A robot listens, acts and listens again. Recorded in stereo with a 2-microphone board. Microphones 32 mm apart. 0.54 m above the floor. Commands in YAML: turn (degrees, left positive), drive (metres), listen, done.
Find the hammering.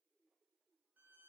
listen: true
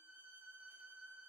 listen: true
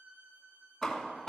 turn: 30
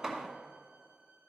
turn: -20
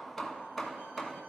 turn: 10
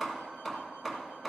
done: "Found it: hammering, straight ahead."